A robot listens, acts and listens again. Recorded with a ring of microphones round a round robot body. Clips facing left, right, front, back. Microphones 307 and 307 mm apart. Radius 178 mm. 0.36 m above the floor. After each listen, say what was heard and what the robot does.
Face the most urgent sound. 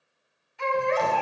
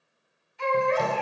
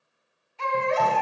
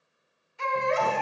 The baby crying: 110° left. Turn 110° left.
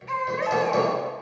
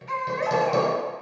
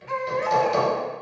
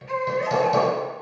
The baby crying is now 35° left. Turn 35° left.
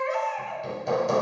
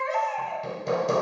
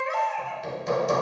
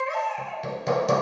The baby crying is now 15° left. Turn 15° left.
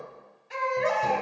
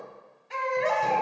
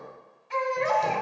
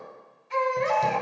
Found it: a baby crying, straight ahead, 1 to 2 m away.